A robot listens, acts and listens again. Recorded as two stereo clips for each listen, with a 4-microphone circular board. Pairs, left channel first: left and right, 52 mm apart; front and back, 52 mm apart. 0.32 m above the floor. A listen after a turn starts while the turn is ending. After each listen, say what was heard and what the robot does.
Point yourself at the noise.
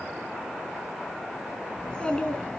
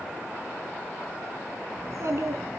The child speaking: 160° left. Turn 160° left.
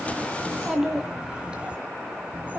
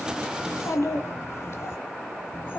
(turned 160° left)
The child speaking is now 40° right. Turn 40° right.
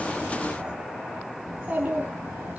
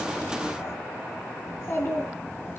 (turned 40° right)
The child speaking is now 35° right. Turn 35° right.
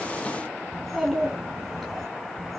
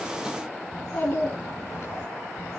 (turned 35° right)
Facing the child speaking.